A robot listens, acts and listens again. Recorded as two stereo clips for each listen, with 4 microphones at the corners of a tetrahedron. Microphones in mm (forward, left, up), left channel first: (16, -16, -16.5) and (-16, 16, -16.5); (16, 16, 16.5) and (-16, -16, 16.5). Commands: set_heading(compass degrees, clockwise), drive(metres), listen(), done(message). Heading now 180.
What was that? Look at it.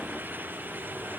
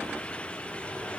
listen()
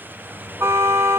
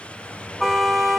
set_heading(45)
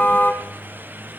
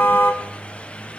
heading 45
done("Found it: a car horn, straight ahead.")